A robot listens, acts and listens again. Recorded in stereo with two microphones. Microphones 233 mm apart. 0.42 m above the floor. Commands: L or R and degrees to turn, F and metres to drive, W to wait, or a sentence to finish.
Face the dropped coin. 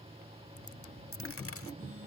L65
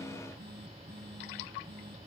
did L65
W
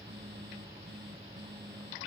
I heard a dropped coin, but can't make it out now. It was about straight ahead or 50° left.